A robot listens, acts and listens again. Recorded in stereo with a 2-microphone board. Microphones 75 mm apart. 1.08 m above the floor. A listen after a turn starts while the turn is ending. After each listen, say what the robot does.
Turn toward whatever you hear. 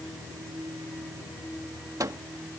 Turn 55° right.
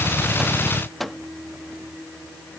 Found it: a microwave, straight ahead.